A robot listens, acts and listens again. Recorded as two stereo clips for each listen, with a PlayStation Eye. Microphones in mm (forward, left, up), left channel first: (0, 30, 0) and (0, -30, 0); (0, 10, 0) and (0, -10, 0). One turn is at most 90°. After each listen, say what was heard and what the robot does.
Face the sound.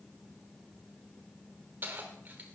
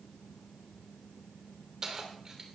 The keys jangling: about 30° right or 150° right. Turn 30° right.
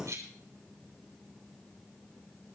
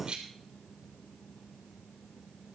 So it is at 120° right. Turn 90° right.
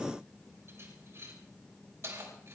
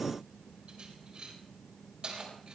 The keys jangling is now 50° right. Turn 50° right.
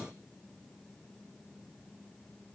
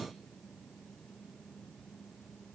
Keep listening.
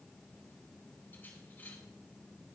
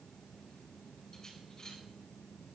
Keep listening.
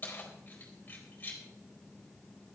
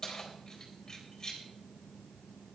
The keys jangling is now 30° left. Turn 30° left.
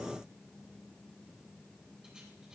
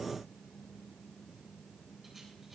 Keep listening.
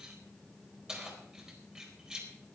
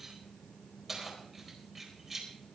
The keys jangling is now 15° right. Turn 15° right.
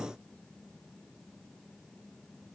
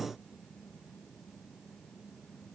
Keep listening.
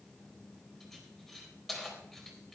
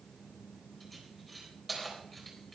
Facing the keys jangling.